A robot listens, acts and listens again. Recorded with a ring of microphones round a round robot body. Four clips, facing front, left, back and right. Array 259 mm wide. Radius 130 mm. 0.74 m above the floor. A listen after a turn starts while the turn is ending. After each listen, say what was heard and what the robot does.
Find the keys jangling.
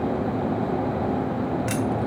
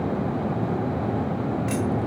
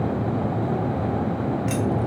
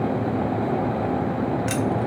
The keys jangling: 65° right. Turn 65° right.
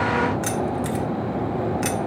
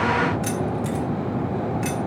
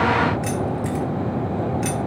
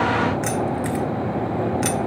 The keys jangling is now 65° right. Turn 65° right.
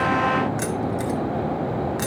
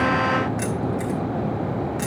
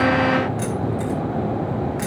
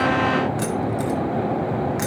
The keys jangling is now 35° right. Turn 35° right.
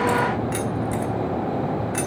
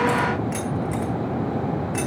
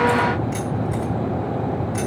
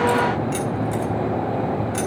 The keys jangling is now 15° right. Turn 15° right.
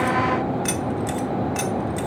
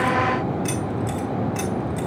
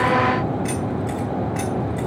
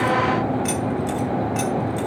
Found it: keys jangling, straight ahead.